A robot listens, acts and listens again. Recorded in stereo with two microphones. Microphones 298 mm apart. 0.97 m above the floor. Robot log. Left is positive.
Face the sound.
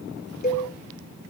note: The cowbell: about 30° left or 150° left.
cmd yaw +30
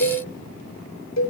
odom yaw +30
note: So it is at 120° left.
cmd yaw +120
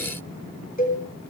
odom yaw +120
note: The cowbell is now 30° left.
cmd yaw +30
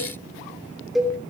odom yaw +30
end: Found it: a cowbell, straight ahead, 2 to 4 m away.